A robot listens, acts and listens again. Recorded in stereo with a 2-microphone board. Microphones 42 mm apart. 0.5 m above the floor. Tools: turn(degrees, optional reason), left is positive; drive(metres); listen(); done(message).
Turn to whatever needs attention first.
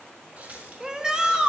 turn(degrees=-15, reason="The shout: about 15° right or 165° right.")
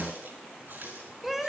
done("Facing the shout, 2 to 4 m away.")